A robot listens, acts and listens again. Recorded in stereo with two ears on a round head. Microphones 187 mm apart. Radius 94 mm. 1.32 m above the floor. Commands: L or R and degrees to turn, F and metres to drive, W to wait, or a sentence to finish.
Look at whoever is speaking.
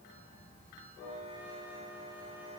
W
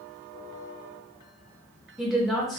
L30
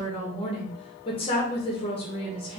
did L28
L150
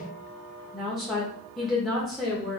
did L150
Found it: a woman speaking, straight ahead, under 1 m away.